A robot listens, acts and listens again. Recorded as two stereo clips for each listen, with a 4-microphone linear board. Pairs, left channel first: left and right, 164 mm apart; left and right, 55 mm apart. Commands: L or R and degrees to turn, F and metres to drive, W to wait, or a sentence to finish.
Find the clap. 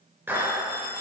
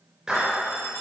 R30
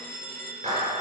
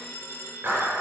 R135
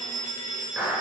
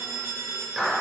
Facing the clap, over 4 m away.